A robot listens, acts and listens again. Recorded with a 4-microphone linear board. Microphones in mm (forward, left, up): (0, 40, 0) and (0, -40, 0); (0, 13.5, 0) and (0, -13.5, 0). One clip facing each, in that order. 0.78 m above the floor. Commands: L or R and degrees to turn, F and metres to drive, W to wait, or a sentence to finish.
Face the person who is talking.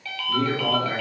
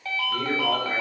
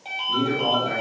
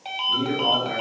L55
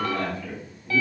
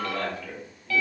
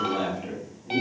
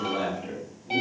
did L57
L20
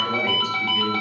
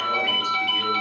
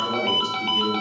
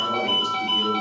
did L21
W
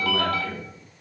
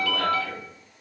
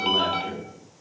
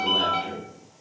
Found it: a man speaking, straight ahead, 1 to 2 m away.